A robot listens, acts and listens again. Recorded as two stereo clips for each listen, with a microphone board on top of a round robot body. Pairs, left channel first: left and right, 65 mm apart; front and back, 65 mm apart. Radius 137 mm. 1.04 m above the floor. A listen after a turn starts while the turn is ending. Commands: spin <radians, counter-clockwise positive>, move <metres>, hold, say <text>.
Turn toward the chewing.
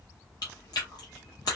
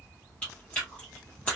spin 1.22
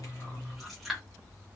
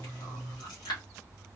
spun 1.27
say Found it: chewing, straight ahead.